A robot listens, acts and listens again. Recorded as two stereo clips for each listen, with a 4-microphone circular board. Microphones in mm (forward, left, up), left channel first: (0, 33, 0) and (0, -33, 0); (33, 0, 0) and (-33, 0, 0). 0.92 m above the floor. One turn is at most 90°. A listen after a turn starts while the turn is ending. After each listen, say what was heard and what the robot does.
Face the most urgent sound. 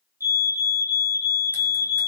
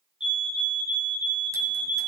The fire alarm: 105° left. Turn 90° left.
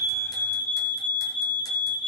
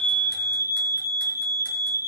The fire alarm is now 25° left. Turn 25° left.
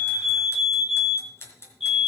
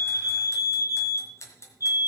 Found it: a fire alarm, straight ahead.